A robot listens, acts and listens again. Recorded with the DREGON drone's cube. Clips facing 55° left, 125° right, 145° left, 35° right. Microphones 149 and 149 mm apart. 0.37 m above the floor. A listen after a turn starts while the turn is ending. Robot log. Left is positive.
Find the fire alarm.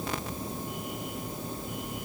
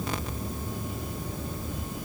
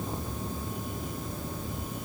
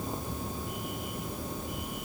cmd idle
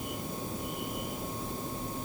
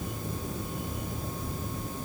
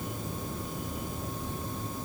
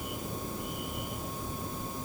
cmd idle
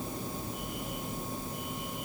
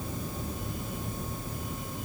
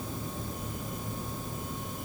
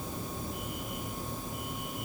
end: I can't make out a fire alarm.